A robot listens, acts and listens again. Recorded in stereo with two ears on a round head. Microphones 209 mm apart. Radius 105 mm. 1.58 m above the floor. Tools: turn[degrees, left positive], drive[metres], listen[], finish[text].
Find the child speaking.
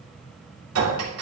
Action: listen[]
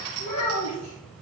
Thought: The child speaking: about 70° left or 110° left.
Action: turn[70]
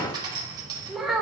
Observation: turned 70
Action: finish[Facing the child speaking.]